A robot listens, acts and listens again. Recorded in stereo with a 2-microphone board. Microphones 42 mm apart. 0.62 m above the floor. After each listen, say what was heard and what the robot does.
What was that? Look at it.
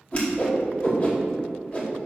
The whoosh: about 35° left or 145° left. Turn 35° left.
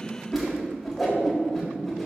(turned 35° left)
Facing the whoosh, 1 to 2 m away.